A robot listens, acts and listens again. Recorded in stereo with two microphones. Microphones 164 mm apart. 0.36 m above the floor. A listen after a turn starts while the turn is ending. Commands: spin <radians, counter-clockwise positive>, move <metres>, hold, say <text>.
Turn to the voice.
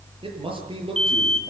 spin -0.61
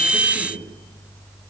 hold
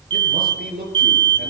spin -1.92
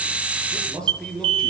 say Facing the man speaking, over 4 m away.